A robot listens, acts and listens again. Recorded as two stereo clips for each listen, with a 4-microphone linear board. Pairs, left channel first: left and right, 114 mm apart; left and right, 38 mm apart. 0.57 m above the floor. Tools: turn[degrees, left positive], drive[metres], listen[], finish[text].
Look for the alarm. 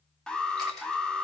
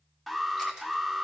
Action: turn[30]
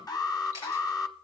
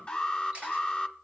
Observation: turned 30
Thought: So it is at 140° left.
Action: turn[140]
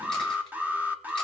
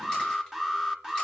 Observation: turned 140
Thought: The alarm is now 20° right.
Action: turn[-20]
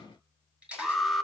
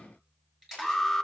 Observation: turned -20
Action: finish[Facing the alarm, under 1 m away.]